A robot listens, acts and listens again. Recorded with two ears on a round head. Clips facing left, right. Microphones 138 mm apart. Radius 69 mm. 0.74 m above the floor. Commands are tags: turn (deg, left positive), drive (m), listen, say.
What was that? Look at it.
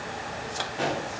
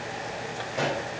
<turn deg="-90"/>
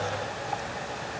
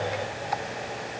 <say>Facing where the pop came from. I can't hear it now.</say>